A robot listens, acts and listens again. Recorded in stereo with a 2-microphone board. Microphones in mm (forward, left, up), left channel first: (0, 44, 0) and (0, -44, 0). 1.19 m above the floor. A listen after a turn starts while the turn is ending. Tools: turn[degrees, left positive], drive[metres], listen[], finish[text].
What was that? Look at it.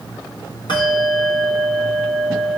Thought: The bell: about 60° left or 120° left.
Action: turn[60]
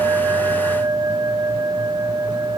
Action: finish[Found it: a bell, straight ahead, 1 to 2 m away.]